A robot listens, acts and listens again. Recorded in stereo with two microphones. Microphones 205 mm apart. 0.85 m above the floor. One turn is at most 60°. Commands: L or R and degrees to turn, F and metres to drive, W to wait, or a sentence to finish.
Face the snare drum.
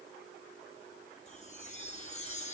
W
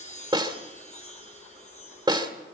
R20
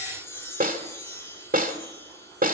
R60
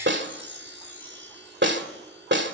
R60
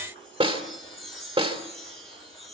R30
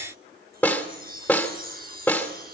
Facing the snare drum.